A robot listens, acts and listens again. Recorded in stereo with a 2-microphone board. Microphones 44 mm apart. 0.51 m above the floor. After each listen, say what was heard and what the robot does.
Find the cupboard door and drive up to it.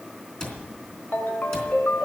The cupboard door: about 20° left or 160° left. Turn 20° left.
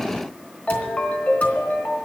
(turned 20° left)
Keep listening.
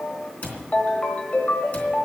So it is at 140° left. Turn 140° left.
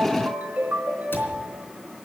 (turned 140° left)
The cupboard door is now 55° left. Turn 55° left.
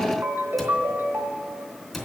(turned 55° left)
Drive 1.0 m forward.
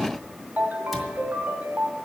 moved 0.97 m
Drive 1.0 m forward.
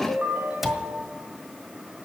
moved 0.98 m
The cupboard door is now 10° right. Turn 10° right.
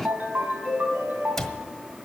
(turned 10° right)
Drive 1.0 m forward.
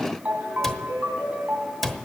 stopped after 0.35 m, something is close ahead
I am next to the cupboard door.